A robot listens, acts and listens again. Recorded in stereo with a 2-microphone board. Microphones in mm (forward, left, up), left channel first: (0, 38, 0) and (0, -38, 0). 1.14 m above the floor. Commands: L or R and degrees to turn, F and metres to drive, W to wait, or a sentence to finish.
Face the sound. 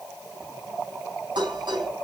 R90
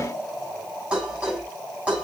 R15
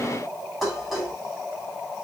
Found it: dishes clattering, straight ahead, over 4 m away.